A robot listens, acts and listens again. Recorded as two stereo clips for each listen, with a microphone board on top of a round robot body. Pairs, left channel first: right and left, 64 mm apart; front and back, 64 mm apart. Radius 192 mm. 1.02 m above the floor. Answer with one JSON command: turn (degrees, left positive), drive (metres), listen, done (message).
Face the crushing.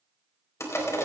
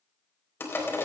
{"turn": -50}
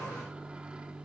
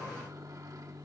{"listen": true}
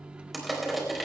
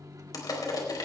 {"done": "Facing the crushing, 2 to 4 m away."}